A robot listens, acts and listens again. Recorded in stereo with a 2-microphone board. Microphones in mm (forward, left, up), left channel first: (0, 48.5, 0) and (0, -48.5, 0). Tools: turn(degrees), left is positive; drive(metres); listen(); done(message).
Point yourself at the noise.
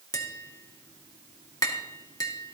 turn(degrees=40)
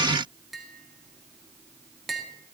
done("Found it: tapping, straight ahead.")